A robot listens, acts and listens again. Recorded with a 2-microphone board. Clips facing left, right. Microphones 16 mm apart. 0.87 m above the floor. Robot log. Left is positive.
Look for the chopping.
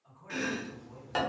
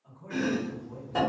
note: The chopping: about 55° left or 125° left.
cmd yaw +55
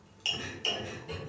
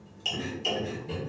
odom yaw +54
note: So it is at 20° left.
cmd yaw +20
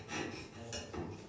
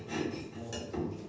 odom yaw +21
end: Facing the chopping.